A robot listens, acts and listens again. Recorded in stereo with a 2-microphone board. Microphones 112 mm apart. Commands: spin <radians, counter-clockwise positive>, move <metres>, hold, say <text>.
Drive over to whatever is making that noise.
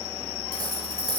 spin -0.61
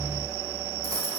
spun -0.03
spin -0.61
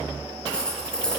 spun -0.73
spin 0.17
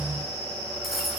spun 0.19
move 1.0
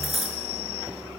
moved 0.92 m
move 1.0
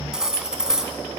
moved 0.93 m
move 1.0
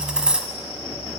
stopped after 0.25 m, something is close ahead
spin -0.17
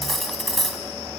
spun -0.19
say I am next to the cutlery clinking.